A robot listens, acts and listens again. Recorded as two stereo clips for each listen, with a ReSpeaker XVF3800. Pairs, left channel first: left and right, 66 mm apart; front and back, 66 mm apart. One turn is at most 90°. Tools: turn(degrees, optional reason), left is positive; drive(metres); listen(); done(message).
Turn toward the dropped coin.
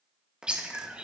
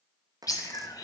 turn(degrees=-90, reason="The dropped coin: 165° right.")
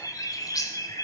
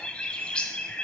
turn(degrees=-75, reason="Nothing new. It was at 75° right.")
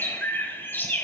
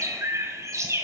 done("I heard a dropped coin from this way, but can't make it out now.")